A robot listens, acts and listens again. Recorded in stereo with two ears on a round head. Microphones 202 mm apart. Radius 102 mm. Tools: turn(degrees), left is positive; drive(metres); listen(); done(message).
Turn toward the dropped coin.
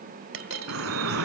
turn(degrees=-65)
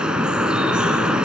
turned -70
listen()
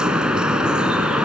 done("I heard a dropped coin, but can't make it out now. It was about 5° left or 45° right.")